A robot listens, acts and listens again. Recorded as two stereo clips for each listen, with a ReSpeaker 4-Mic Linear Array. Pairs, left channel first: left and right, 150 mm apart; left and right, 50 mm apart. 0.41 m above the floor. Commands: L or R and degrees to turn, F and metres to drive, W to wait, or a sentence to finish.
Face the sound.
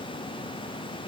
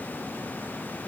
W
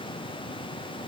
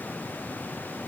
W
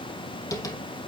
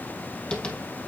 L20
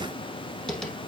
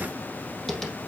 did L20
Facing the tapping.